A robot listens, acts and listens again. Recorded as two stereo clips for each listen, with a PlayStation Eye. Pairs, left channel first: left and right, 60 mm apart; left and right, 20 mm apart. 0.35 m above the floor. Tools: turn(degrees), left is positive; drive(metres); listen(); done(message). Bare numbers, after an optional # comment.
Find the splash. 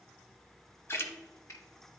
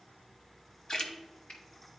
# The splash: about 45° left or 135° left.
turn(45)
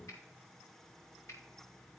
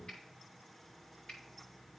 listen()
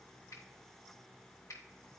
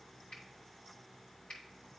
done("I heard a splash, but can't make it out now. It was about straight ahead or 90° left.")